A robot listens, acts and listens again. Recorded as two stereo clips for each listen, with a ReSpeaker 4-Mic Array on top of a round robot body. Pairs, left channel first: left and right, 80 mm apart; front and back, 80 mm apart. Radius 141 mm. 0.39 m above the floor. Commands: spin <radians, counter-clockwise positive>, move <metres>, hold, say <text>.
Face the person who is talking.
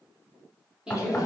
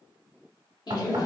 spin -0.17
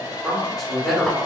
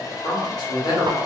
say Facing the woman speaking, 1 to 2 m away.